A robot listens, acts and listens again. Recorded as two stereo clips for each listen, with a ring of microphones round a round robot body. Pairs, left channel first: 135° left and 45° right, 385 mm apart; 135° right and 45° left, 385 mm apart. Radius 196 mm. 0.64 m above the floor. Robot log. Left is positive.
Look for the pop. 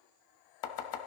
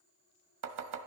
cmd idle
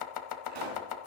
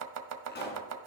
note: The pop: 70° right.
cmd yaw -70
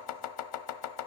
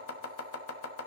end: Facing where the pop came from. I can't hear it now.